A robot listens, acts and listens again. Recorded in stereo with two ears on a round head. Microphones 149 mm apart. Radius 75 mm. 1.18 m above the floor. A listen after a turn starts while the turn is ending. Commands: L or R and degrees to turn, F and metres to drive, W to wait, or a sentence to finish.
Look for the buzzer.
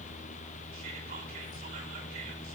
W
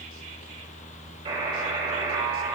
R35
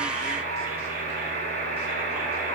R110
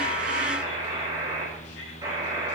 R20
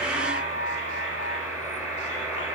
Found it: a buzzer, straight ahead.